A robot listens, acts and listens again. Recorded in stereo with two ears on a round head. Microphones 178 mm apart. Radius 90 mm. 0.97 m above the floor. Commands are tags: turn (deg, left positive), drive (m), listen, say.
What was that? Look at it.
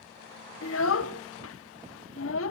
<turn deg="90"/>
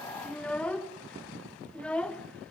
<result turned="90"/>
<say>Found it: a child speaking, straight ahead.</say>